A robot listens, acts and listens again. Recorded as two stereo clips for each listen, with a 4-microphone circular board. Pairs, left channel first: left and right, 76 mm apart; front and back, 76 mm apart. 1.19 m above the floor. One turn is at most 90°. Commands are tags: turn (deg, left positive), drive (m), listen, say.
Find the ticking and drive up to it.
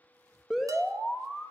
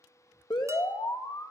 <listen/>
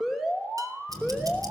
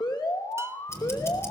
<turn deg="-55"/>
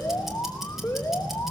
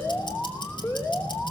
<drive m="1.0"/>
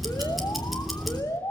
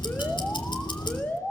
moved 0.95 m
<drive m="1.0"/>
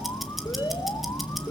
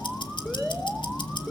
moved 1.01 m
<drive m="1.0"/>
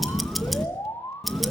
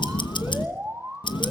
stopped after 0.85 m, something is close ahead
<say>Arrived at the ticking, straight ahead.</say>